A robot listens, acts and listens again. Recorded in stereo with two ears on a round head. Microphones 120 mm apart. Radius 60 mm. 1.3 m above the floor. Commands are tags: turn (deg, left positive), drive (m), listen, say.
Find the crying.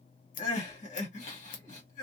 <turn deg="55"/>
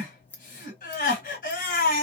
<turn deg="70"/>
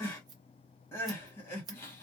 <turn deg="20"/>
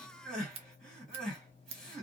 <say>Found it: crying, straight ahead.</say>